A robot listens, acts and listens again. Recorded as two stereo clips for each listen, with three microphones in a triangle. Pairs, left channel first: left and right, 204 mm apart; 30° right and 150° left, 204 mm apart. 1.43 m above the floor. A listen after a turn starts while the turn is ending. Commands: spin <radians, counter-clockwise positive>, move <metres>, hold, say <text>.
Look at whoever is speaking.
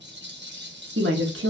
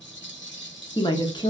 spin -1.75
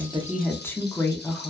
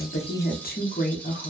spin 0.17
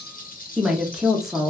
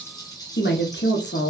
say Found it: a woman speaking, straight ahead, under 1 m away.